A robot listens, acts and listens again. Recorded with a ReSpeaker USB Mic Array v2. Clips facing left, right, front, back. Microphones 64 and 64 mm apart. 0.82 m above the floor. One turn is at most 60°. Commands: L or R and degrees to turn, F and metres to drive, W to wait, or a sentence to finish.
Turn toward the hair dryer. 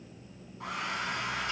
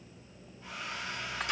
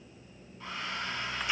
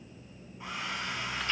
L60
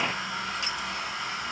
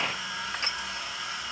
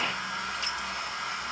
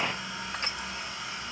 L40
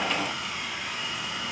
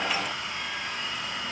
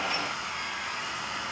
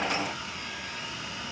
Found it: a hair dryer, straight ahead, over 4 m away.